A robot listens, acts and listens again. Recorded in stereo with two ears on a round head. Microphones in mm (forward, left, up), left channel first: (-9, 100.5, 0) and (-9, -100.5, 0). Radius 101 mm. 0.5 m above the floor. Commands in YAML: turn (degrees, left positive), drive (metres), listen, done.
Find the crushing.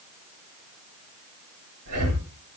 listen: true
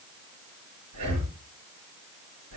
listen: true
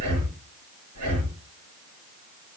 done: "I can't make out crushing to turn to."